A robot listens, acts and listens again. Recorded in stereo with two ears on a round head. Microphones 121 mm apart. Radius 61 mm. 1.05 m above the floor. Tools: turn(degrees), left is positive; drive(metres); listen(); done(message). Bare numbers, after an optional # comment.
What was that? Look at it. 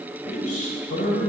# The man speaking: about 60° left or 120° left.
turn(60)
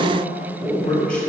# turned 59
# So it is at 10° left.
turn(10)
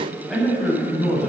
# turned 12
done("Found it: a man speaking, straight ahead, over 4 m away.")